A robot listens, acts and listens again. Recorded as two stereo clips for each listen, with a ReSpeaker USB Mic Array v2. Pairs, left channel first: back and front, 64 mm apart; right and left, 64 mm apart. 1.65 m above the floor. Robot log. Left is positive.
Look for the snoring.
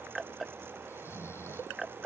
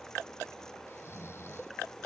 note: The snoring: 135° right.
cmd yaw -135
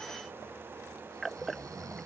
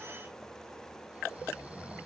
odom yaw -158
note: The snoring is now 20° left.
cmd yaw +20
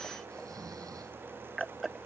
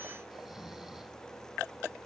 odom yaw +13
note: The snoring is now 10° left.
cmd yaw +10
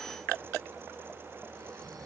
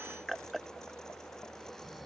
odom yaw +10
end: Facing the snoring.